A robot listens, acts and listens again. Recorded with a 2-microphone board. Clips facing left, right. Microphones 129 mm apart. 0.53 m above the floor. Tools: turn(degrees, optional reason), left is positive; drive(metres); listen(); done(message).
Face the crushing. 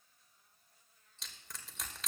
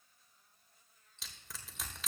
turn(degrees=30)
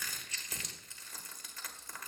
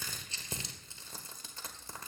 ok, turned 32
turn(degrees=-30, reason="So it is at 30° right.")
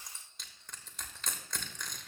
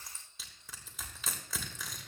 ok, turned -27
done("Facing the crushing, 1 to 2 m away.")